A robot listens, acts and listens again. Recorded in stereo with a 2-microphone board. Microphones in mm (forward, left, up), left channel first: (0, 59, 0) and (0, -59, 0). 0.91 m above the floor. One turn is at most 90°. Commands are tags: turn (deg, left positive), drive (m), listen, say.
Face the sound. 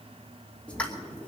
<turn deg="30"/>
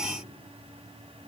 <listen/>
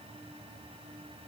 <say>I heard a pop, but can't make it out now. It was about 20° right or 140° left.</say>